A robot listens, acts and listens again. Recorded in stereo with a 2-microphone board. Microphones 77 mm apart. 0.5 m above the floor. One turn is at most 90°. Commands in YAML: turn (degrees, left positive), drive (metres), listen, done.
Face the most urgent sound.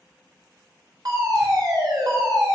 turn: -60
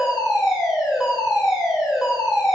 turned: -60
turn: -10
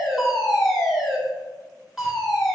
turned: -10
done: "Facing the fire alarm."